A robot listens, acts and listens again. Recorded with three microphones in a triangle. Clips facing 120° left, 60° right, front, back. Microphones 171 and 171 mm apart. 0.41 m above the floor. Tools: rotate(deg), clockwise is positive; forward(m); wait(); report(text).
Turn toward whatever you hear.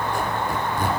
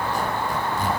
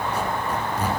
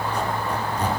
rotate(-80)
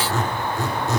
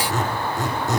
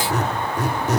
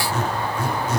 rotate(-10)
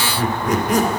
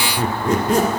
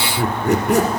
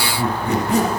report("Found it: a squeak, straight ahead.")